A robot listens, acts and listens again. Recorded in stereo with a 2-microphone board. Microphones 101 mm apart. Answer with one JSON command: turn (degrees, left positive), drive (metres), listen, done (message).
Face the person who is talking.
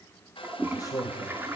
{"turn": 35}
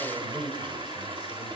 {"done": "Facing the man speaking, 2 to 4 m away."}